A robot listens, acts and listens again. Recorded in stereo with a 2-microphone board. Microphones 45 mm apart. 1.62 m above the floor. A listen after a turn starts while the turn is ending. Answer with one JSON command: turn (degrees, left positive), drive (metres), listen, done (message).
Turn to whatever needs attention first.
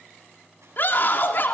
{"turn": 50}
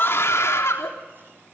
{"turn": 80}
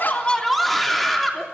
{"done": "Found it: a scream, straight ahead."}